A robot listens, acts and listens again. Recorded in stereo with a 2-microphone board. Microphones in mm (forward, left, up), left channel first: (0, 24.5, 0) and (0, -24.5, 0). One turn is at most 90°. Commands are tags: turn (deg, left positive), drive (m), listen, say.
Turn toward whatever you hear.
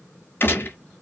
<turn deg="50"/>
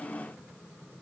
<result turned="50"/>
<listen/>
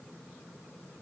<say>I heard a gunshot, but can't make it out now. It was about straight ahead or 80° left.</say>